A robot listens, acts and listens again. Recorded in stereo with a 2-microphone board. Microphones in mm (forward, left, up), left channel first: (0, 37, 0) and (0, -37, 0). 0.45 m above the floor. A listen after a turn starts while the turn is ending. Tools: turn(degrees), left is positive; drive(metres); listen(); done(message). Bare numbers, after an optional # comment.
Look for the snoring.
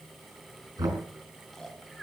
turn(30)
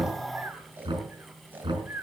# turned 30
# So it is at 25° right.
turn(-25)
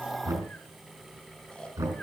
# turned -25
# The snoring is now 15° left.
turn(15)
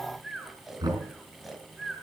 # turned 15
done("Facing the snoring, 2 to 4 m away.")